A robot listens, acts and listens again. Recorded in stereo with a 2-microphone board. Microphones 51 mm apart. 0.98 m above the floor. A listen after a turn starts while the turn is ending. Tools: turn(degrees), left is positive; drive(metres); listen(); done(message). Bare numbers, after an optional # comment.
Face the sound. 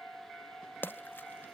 # The splash: about 40° left or 140° left.
turn(40)
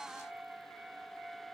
listen()
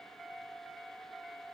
done("I heard a splash, but can't make it out now. It was about straight ahead or 100° left.")